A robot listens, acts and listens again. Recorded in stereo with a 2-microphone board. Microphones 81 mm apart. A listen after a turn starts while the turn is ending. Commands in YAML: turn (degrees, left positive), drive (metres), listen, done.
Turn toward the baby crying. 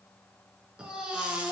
turn: -30
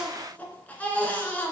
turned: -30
turn: 20
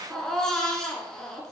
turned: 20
done: "Facing the baby crying, 1 to 2 m away."